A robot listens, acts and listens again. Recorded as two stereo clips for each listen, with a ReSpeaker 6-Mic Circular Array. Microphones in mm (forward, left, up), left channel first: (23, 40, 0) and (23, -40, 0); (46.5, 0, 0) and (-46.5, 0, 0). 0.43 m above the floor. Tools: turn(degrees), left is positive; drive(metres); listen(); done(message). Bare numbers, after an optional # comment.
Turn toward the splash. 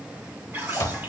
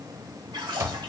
# The splash: 150° right.
turn(-150)
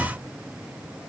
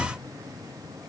done("I heard a splash from this way, but can't make it out now.")